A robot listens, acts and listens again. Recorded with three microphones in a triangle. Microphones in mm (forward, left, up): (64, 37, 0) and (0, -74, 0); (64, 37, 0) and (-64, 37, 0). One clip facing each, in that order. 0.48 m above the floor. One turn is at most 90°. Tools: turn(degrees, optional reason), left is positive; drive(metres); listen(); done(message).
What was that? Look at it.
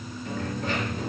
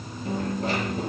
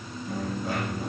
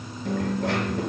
turn(degrees=-90, reason="The dropped coin: 175° right.")
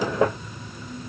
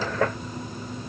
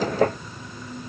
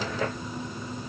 turn(degrees=-85, reason="Nothing new. It was at 85° right.")
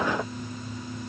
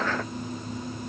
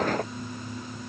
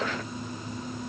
done("Facing where the dropped coin came from. I can't hear it now.")